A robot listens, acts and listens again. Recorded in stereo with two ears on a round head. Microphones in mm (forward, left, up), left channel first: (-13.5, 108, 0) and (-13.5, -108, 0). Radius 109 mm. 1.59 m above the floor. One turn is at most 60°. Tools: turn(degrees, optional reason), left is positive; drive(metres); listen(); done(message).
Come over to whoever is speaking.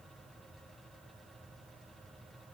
listen()
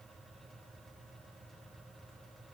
listen()
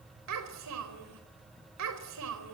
turn(degrees=-60)
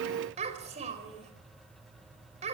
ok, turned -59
turn(degrees=-30, reason="So it is at 30° right.")
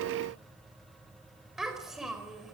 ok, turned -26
drive(metres=1.0)
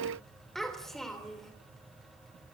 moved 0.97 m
drive(metres=1.0)
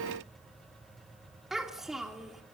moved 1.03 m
drive(metres=1.0)
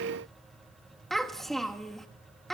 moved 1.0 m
drive(metres=1.0)
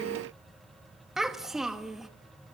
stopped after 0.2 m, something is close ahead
done("Arrived at the child speaking, straight ahead.")